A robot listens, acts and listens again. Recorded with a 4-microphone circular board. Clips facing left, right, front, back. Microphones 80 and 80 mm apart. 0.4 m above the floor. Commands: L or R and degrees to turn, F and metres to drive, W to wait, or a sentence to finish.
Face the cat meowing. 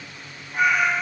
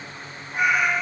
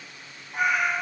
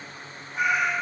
R15
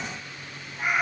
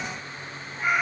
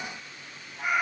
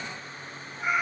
L15
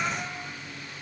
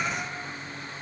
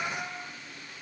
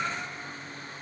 Facing the cat meowing.